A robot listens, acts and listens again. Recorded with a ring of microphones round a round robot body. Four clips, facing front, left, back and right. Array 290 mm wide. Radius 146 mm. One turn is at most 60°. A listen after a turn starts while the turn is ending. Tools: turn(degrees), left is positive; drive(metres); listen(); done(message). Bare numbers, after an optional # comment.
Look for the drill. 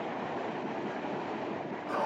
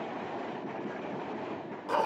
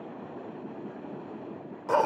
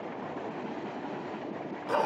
listen()
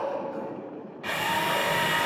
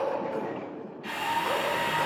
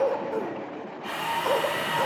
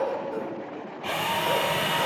# The drill: 60° right.
turn(-60)
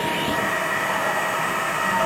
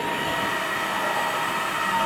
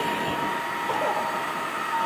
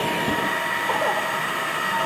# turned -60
# The drill is now 15° right.
turn(-15)
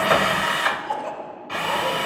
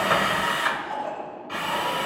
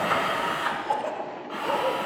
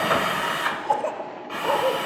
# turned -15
done("Found it: a drill, straight ahead.")